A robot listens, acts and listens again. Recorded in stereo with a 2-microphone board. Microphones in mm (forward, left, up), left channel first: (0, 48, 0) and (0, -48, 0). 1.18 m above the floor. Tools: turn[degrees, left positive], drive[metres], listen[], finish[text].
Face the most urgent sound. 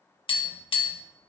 Action: listen[]
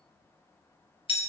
Action: listen[]
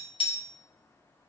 Action: finish[I can't make out anything urgent to turn to.]